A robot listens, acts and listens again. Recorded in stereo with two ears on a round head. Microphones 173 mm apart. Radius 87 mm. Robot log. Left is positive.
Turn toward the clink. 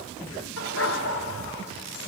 cmd idle
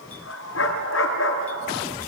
cmd idle
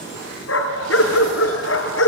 end: I can't make out a clink, only a dog barking.